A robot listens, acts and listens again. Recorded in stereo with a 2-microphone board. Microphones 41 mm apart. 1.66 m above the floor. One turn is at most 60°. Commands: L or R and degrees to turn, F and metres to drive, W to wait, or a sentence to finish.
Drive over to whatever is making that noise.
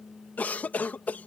L45
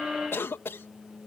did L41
L60
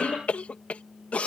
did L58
L35
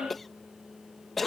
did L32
F1.0
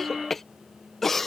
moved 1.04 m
L10
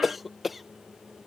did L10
F1.0
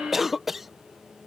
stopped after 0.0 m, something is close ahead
I am next to the cough.